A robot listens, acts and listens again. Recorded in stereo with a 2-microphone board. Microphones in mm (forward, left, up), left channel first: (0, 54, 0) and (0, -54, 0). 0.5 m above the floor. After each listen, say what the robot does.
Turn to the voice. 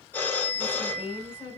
Turn 30° right.
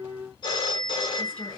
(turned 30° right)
Turn 15° left.
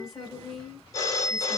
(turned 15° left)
Found it: a woman speaking, straight ahead, 2 to 4 m away.